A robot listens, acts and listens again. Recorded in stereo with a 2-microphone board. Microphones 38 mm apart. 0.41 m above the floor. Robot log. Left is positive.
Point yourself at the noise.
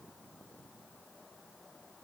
cmd idle
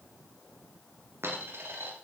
cmd yaw -90
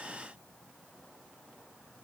end: I heard a dropped coin from this way, but can't make it out now.